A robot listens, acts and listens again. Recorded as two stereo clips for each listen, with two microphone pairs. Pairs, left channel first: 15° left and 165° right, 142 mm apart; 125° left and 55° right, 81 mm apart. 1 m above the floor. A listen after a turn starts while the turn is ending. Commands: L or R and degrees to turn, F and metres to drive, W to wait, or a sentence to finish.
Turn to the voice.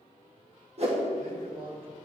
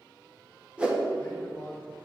R170
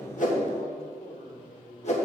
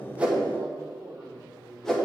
Found it: a man speaking, straight ahead.